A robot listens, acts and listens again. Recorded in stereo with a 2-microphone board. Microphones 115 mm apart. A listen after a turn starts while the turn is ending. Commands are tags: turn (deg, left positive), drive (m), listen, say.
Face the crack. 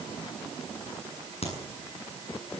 <turn deg="60"/>
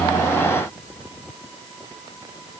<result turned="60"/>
<listen/>
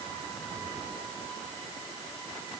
<say>I heard a crack, but can't make it out now. It was about straight ahead or 60° left.</say>